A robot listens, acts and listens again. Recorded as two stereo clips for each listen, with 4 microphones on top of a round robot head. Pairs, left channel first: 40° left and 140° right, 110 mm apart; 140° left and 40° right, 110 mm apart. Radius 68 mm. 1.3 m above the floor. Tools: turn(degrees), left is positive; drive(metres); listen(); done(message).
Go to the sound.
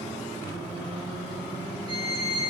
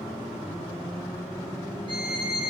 turn(degrees=-90)
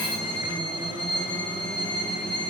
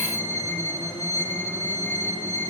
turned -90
turn(degrees=-10)
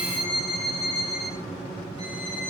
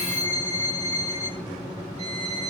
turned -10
drive(metres=1.0)
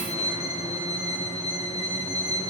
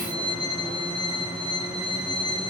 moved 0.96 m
drive(metres=1.0)
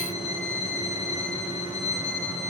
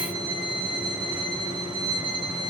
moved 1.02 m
turn(degrees=10)
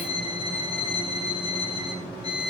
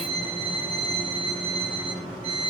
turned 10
drive(metres=1.0)
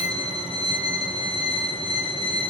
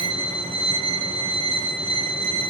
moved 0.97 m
drive(metres=1.0)
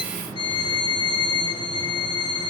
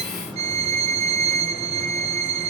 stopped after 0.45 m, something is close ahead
turn(degrees=-10)
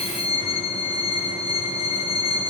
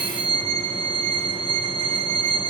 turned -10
done("I am next to the violin.")